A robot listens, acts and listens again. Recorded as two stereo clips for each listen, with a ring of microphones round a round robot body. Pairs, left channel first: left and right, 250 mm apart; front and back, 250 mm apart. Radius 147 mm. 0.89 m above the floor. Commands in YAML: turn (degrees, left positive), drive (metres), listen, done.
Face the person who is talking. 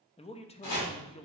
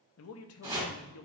turn: 25
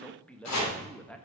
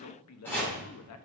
done: "Found it: a man speaking, straight ahead."